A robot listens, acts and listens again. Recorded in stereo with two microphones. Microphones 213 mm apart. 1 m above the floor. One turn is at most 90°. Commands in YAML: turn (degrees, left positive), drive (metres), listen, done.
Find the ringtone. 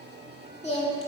listen: true
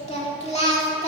listen: true
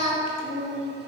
done: "I can't make out a ringtone to turn to."